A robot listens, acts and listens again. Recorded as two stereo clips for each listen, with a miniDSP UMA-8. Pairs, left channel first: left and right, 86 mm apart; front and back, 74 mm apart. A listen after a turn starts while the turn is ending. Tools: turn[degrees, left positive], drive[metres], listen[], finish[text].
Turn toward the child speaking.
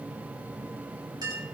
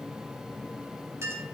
Action: listen[]
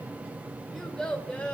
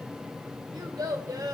Thought: The child speaking: 165° left.
Action: turn[165]
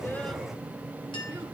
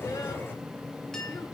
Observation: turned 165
Action: listen[]
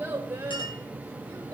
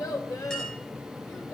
Thought: The child speaking is now 30° right.
Action: turn[-30]
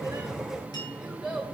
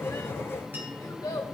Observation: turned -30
Thought: The child speaking is now 10° right.
Action: turn[-10]
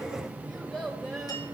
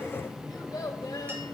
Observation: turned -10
Action: finish[Facing the child speaking, 1 to 2 m away.]